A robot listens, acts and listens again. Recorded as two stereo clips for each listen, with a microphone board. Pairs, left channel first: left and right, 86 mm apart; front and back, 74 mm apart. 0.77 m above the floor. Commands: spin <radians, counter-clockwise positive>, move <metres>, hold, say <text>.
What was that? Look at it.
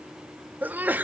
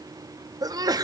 spin -2.71
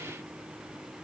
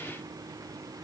say Facing where the sneeze came from. I can't hear it now.